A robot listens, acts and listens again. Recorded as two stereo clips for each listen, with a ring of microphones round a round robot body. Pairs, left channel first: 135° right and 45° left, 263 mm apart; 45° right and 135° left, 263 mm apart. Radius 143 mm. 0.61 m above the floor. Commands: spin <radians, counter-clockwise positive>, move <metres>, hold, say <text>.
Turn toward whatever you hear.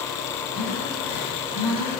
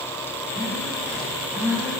spin -2.53
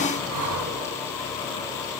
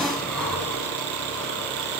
spin 0.70
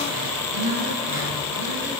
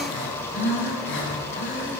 say Facing the breathing.